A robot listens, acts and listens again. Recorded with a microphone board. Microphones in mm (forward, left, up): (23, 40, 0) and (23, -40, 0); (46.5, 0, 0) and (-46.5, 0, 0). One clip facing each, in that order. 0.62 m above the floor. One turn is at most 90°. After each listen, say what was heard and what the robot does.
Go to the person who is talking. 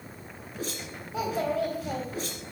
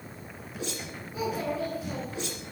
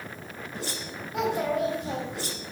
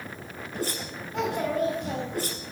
The child speaking: 85° left. Turn 85° left.
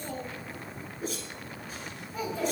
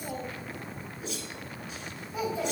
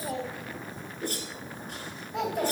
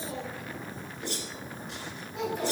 The child speaking is now 10° right. Turn 10° right.
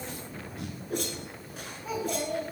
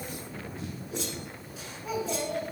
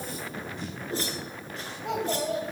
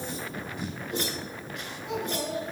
Drive 1.0 m forward.
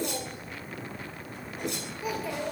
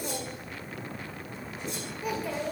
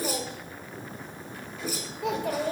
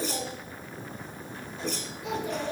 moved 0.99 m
Drive 1.0 m forward.
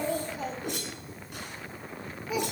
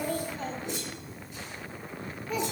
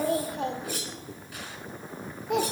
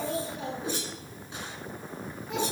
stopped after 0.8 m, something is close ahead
I am next to the child speaking.